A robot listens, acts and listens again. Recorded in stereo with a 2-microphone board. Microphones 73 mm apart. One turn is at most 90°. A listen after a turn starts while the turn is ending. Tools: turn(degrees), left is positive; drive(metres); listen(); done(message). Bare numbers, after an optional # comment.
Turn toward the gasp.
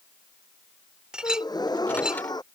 turn(90)
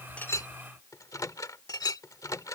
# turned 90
done("Facing where the gasp came from. I can't hear it now.")